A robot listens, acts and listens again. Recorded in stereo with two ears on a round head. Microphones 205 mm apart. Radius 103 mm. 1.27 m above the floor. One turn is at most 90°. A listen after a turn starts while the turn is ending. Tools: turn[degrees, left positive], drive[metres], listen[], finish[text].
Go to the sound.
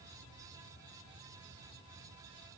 Action: listen[]
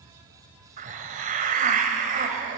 Thought: The hiss: about 35° right or 145° right.
Action: turn[-35]
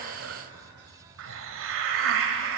Thought: So it is at 105° right.
Action: turn[-90]
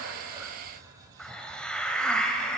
Action: drive[1.0]
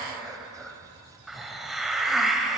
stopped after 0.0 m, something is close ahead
Action: finish[Something is in my way. I am facing the hiss but have not reached it.]